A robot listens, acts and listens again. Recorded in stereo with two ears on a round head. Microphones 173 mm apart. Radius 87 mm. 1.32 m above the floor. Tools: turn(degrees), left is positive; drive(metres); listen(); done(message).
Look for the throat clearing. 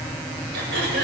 turn(degrees=-60)
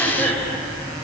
done("Found it: throat clearing, straight ahead, over 4 m away.")